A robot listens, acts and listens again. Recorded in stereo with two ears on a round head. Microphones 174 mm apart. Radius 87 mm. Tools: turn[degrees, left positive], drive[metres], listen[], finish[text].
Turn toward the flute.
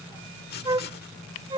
Thought: The flute: about 25° right or 155° right.
Action: turn[-25]
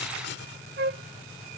Thought: So it is at 130° right.
Action: turn[-130]
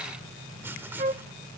Thought: The flute is now 35° right.
Action: turn[-35]
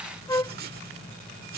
Thought: The flute is now 20° left.
Action: turn[20]
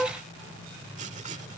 Action: finish[Found it: a flute, straight ahead.]